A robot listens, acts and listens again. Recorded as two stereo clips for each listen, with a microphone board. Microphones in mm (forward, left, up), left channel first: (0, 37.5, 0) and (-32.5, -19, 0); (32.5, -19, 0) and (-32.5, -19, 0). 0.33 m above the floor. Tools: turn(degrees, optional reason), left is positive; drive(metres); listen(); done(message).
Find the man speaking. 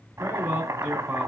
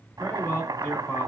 turn(degrees=-50, reason="The man speaking: 50° right.")
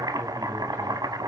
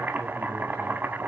listen()
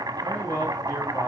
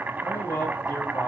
done("Facing the man speaking, 2 to 4 m away.")